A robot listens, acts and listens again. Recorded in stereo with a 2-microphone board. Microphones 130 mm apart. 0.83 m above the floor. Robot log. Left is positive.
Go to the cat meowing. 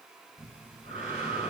cmd idle
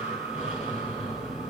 cmd idle
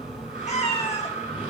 note: The cat meowing: about 60° left or 120° left.
cmd yaw +60
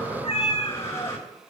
note: So it is at 55° left.
cmd yaw +55
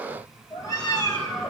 note: The cat meowing is now 30° left.
cmd yaw +30
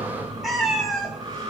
cmd fwd 1.0
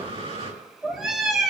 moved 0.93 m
cmd fwd 1.0
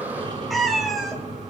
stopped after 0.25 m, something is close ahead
end: I am next to the cat meowing.